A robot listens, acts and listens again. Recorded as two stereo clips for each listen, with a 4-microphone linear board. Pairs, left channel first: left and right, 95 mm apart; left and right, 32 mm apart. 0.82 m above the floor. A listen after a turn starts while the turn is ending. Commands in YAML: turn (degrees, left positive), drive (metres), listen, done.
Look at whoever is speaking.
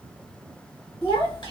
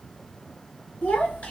turn: 65
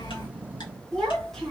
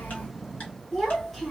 done: "Facing the child speaking, 1 to 2 m away."